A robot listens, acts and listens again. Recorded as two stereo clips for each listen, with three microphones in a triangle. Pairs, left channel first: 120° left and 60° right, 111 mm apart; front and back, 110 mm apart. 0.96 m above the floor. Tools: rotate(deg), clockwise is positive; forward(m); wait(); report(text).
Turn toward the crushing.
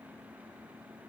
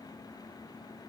wait()
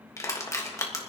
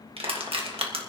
rotate(-175)
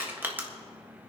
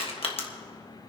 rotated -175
rotate(-10)
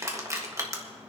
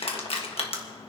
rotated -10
report("Found it: crushing, straight ahead, 1 to 2 m away.")